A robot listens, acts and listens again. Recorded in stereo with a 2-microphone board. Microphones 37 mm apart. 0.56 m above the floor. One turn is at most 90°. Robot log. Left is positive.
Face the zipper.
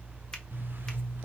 note: The zipper: about 70° right or 110° right.
cmd yaw -70
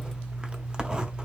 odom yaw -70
note: So it is at 25° right.
cmd yaw -25
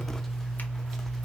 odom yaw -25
note: The zipper is now 10° left.
cmd yaw +10
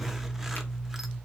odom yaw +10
end: Found it: a zipper, straight ahead, under 1 m away.